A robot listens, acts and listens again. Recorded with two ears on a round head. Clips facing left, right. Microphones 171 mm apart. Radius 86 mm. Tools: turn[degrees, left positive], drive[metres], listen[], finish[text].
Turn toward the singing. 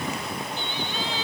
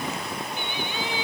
Action: turn[-30]
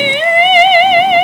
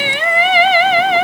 Thought: So it is at 15° left.
Action: turn[15]
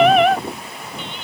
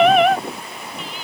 Action: finish[Found it: singing, straight ahead.]